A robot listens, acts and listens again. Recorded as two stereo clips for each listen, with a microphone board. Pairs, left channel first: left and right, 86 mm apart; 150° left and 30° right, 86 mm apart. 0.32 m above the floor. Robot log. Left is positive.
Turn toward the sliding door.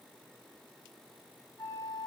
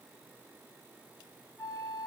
cmd idle
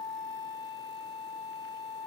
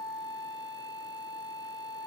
cmd idle
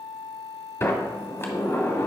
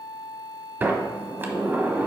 note: The sliding door: 35° left.
cmd yaw +35
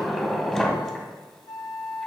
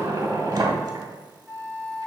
end: Facing the sliding door.